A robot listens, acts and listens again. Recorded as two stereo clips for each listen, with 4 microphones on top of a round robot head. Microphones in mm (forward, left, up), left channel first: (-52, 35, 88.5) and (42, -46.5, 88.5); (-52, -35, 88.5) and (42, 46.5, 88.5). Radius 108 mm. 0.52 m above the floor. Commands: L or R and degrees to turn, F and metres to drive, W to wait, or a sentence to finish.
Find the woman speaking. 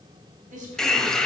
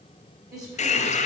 R25
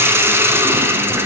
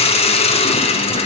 W
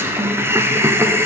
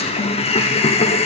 W
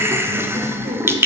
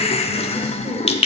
Facing where the woman speaking came from. I can't hear it now.